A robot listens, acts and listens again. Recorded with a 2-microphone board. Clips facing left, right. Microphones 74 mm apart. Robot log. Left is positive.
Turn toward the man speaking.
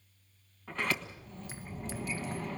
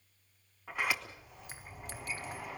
cmd idle
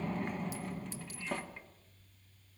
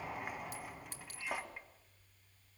cmd idle
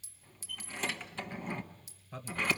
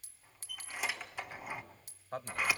note: The man speaking: about 55° right or 125° right.
cmd yaw -55
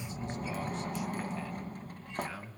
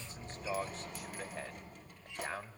note: So it is at 50° right.
cmd yaw -50
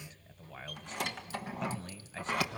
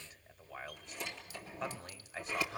note: The man speaking is now 10° right.
cmd yaw -10
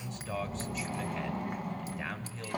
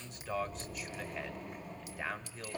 end: Facing the man speaking, 1 to 2 m away.